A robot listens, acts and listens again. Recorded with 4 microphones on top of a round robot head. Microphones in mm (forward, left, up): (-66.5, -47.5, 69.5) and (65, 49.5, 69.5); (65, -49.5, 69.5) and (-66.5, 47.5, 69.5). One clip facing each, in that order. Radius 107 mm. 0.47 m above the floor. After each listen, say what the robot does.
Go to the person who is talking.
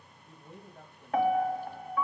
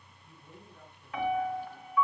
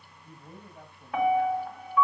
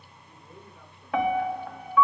Turn 90° right.
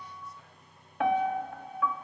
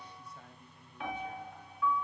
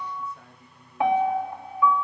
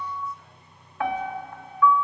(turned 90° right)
Keep listening.
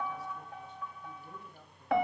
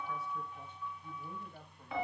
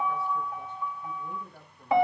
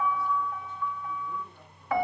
Keep listening.
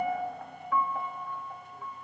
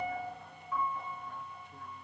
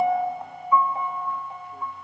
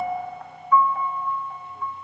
I heard a man speaking from this way, but can't make it out now. I did not reach it.